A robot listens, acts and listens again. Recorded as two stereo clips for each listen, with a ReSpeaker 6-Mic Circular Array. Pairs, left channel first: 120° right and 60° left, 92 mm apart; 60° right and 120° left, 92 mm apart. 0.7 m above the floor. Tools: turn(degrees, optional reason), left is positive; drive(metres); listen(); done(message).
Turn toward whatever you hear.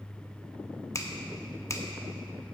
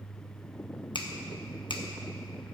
turn(degrees=-70, reason="The finger snap: 70° right.")
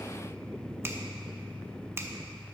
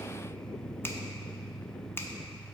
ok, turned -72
done("Found it: a finger snap, straight ahead.")